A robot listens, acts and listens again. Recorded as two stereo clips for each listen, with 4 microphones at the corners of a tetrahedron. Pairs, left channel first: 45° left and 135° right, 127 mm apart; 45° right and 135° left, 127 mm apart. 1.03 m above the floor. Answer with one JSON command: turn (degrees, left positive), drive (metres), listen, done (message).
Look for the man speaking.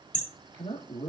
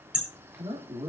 {"turn": 90}
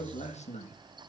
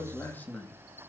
{"turn": 35}
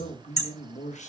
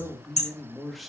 {"turn": 45}
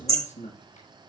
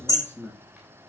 {"turn": 30}
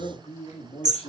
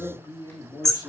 {"turn": 10}
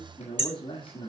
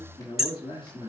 {"done": "Facing the man speaking, 2 to 4 m away."}